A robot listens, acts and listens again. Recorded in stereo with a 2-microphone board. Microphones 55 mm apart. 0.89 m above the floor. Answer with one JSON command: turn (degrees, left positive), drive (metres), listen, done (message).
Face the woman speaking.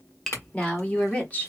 {"turn": 30}
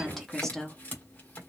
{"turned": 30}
{"turn": 10}
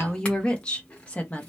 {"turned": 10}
{"turn": 30}
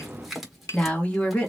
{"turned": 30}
{"turn": 25}
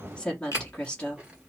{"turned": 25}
{"turn": 20}
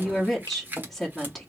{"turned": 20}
{"done": "Found it: a woman speaking, straight ahead."}